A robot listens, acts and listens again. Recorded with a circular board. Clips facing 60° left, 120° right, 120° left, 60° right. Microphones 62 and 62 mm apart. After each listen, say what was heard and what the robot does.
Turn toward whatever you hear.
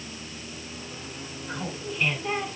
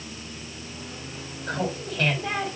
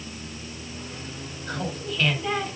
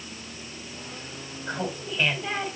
The laughter: 130° right. Turn 130° right.
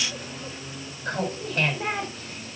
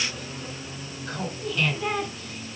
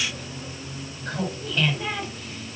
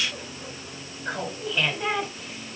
The laughter is now 20° left. Turn 20° left.
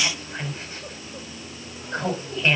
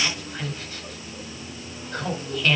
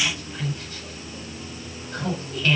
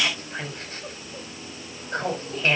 Facing the laughter.